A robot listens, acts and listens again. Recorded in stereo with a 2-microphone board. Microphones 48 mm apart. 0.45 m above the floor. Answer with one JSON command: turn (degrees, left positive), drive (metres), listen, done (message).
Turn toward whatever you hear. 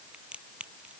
{"turn": -25}
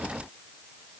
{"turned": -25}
{"listen": true}
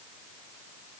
{"done": "I heard a crack, but can't make it out now. It was about straight ahead or 130° right."}